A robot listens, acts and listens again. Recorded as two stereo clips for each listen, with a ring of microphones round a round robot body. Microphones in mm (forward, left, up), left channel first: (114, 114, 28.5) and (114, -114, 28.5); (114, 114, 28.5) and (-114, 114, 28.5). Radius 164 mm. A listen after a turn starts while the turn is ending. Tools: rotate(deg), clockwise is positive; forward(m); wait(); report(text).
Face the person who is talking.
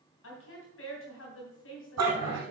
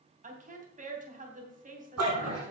rotate(-125)
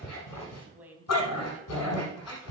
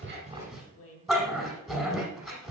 rotate(10)
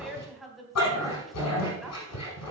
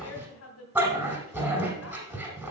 report("Found it: a woman speaking, straight ahead.")